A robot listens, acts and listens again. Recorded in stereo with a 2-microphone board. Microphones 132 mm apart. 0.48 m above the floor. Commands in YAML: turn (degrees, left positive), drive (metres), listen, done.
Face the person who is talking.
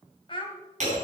turn: 40
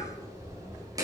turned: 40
listen: true
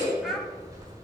listen: true
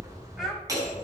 done: "I heard a child speaking, but can't make it out now. It was about straight ahead or 100° left."